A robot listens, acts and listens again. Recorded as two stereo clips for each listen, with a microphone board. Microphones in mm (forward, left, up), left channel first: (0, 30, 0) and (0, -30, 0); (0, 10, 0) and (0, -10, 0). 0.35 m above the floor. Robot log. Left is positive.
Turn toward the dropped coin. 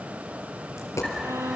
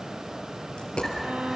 note: The dropped coin: about 55° left or 125° left.
cmd yaw +55
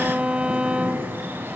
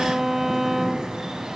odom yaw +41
cmd idle
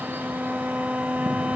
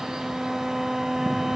end: I heard a dropped coin, but can't make it out now. It was about 15° left or 85° left.